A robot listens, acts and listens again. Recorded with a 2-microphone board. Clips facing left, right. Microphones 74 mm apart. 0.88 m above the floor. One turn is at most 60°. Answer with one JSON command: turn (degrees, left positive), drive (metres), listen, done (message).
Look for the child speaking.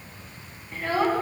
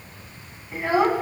{"turn": -15}
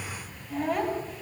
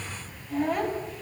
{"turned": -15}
{"turn": 30}
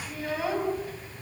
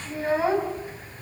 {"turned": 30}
{"turn": -30}
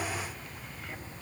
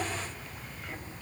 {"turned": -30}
{"listen": true}
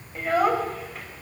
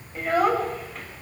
{"done": "Facing the child speaking."}